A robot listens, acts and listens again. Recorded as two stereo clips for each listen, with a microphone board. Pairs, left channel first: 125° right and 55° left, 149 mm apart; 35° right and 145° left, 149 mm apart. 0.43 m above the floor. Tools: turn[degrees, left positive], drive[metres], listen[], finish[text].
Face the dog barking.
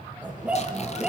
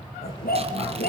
Thought: The dog barking: 30° right.
Action: turn[-30]
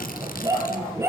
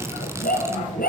Thought: The dog barking is now 15° right.
Action: turn[-15]
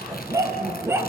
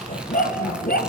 Thought: The dog barking is now 20° right.
Action: turn[-20]
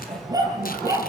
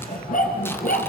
Thought: The dog barking is now 15° right.
Action: turn[-15]
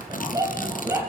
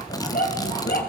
Thought: The dog barking is now 15° right.
Action: turn[-15]
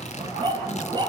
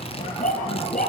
Action: finish[Facing the dog barking.]